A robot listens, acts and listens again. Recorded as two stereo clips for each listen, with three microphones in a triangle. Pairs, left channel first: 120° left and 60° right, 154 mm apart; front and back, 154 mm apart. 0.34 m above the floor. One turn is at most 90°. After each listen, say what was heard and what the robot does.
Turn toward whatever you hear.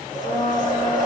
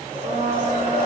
The blender: 140° left. Turn 90° left.
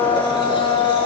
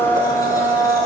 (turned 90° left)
The blender is now 65° left. Turn 65° left.
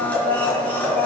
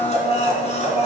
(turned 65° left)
The blender is now 40° left. Turn 40° left.
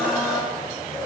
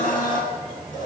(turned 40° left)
The blender is now 25° left. Turn 25° left.
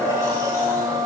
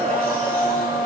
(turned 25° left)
The blender is now 10° left. Turn 10° left.
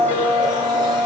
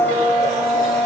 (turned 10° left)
Facing the blender, 2 to 4 m away.